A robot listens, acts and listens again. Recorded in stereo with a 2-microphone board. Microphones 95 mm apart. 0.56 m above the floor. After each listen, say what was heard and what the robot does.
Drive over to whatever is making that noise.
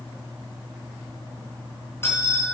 The bell: about 25° left or 155° left. Turn 25° left.
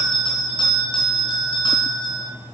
So it is at 125° left. Turn 125° left.
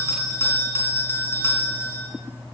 The bell is now 25° left. Turn 25° left.
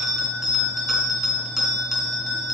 Drive 1.0 m forward.
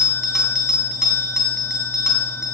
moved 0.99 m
Drive 1.0 m forward.
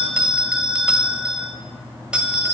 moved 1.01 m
The bell is now 10° right. Turn 10° right.
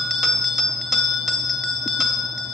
Drive 1.0 m forward.
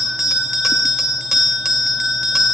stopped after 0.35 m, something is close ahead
I am next to the bell.